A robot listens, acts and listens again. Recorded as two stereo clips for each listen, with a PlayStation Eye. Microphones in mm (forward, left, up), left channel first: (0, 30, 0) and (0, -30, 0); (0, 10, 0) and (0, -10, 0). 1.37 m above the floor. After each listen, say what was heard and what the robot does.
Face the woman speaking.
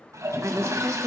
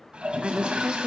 The woman speaking: about 55° right or 125° right. Turn 55° right.
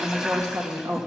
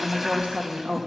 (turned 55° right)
So it is at 75° right. Turn 75° right.
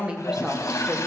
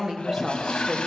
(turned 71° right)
The woman speaking is now 15° right. Turn 15° right.
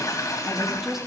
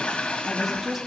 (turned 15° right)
Facing the woman speaking, 2 to 4 m away.